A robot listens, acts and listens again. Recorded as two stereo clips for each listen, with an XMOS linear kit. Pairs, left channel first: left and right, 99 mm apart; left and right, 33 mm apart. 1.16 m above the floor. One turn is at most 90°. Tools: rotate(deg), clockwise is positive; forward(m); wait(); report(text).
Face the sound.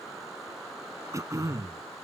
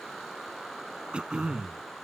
rotate(30)
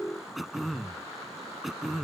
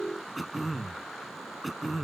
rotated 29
report("Facing the throat clearing.")